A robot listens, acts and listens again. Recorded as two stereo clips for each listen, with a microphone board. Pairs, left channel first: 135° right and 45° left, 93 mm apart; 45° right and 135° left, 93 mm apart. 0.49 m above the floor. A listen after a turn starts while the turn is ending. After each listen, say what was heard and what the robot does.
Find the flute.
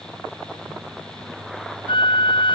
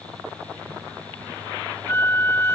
The flute: 110° right. Turn 110° right.
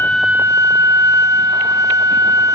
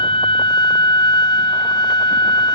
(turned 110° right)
The flute is now 10° right. Turn 10° right.
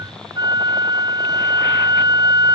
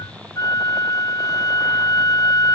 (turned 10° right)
Found it: a flute, straight ahead.